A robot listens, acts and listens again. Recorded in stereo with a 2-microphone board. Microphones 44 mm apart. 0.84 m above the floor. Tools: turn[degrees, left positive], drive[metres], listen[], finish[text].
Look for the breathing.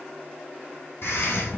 Thought: The breathing: about 70° left or 110° left.
Action: turn[70]
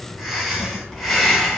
Action: finish[Found it: breathing, straight ahead.]